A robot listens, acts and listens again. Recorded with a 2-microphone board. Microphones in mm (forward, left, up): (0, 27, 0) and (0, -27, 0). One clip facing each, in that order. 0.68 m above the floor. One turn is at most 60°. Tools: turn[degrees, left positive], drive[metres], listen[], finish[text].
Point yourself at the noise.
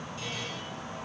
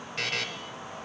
Action: turn[-60]
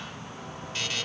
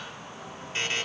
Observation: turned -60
Thought: So it is at 30° right.
Action: turn[-30]
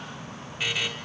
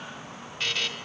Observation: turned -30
Thought: The buzzer is now 15° left.
Action: turn[15]
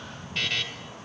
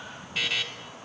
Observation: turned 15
Action: finish[Facing the buzzer.]